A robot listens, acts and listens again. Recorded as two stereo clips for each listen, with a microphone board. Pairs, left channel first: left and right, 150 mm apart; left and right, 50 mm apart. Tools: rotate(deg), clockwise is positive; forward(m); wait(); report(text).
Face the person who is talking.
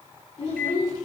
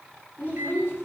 rotate(-45)
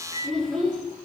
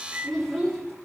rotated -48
report("Found it: a child speaking, straight ahead, 2 to 4 m away.")